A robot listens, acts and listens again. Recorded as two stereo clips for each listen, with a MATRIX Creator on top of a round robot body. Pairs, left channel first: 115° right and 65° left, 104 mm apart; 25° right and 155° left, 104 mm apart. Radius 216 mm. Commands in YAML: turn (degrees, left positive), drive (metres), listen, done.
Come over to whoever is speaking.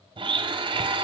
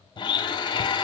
listen: true
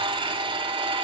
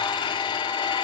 listen: true
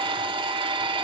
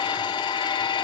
done: "I can't make out anyone speaking to turn to."